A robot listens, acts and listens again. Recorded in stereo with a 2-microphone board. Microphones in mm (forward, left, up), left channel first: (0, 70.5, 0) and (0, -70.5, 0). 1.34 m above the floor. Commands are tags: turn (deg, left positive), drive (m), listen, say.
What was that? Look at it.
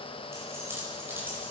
<turn deg="-30"/>
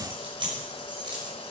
<turn deg="-150"/>
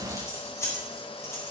<turn deg="20"/>
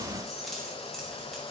<say>Facing the keys jangling, over 4 m away.</say>